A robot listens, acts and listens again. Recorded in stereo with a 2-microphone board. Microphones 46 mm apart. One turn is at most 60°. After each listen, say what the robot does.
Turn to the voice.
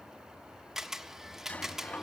Keep listening.
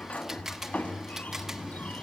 Keep listening.
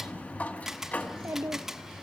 Turn 60° right.
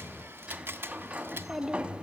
Turn 10° right.
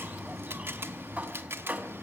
Keep listening.
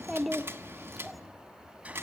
Found it: a child speaking, straight ahead.